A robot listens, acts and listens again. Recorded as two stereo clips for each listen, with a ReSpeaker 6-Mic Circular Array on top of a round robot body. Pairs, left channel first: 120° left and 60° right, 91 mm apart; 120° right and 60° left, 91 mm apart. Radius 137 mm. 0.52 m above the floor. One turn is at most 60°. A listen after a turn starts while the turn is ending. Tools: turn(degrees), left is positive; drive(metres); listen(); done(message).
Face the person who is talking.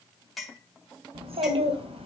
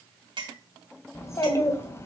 turn(degrees=-60)
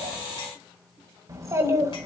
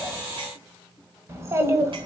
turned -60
done("Found it: a child speaking, straight ahead, 1 to 2 m away.")